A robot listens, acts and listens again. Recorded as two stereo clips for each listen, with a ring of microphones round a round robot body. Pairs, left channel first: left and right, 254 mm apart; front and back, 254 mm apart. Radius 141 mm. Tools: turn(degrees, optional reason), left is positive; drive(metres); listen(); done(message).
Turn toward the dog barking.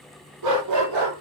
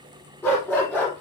turn(degrees=-85, reason="The dog barking: 85° right.")
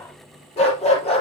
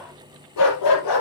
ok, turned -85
turn(degrees=25, reason="The dog barking is now 25° left.")
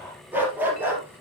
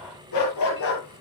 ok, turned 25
done("Facing the dog barking.")